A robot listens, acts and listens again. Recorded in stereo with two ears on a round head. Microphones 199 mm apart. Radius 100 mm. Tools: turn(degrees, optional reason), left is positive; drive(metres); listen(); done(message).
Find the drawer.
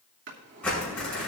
turn(degrees=-55, reason="The drawer: about 55° right or 125° right.")
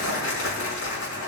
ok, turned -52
listen()
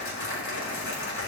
listen()
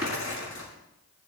done("I heard a drawer, but can't make it out now. It was about 5° right or 75° right.")